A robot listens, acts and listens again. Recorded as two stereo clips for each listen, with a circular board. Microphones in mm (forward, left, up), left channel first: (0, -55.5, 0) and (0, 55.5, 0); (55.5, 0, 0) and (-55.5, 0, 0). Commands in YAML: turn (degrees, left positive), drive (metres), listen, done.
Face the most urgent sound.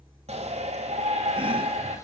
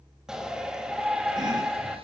turn: 95
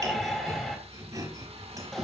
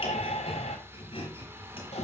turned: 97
done: "Facing the shout."